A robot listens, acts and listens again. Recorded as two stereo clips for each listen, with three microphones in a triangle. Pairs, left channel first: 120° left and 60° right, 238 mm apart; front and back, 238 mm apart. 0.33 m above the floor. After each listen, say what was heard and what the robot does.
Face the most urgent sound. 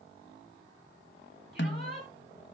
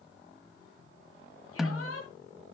The shout: 15° right. Turn 15° right.
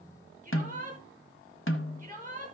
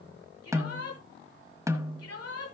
Facing the shout, over 4 m away.